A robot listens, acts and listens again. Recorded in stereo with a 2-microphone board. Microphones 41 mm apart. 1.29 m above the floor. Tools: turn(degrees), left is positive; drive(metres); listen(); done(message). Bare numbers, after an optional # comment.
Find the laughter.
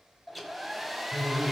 # The laughter: about 70° left or 110° left.
turn(70)
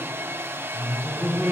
done("Facing the laughter.")